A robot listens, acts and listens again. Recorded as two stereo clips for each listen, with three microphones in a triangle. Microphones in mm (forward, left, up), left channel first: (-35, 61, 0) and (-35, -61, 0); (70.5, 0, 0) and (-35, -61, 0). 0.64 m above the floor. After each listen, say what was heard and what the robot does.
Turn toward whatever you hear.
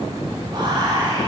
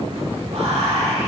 The whispering: 130° right. Turn 130° right.
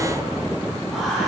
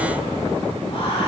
Facing the whispering.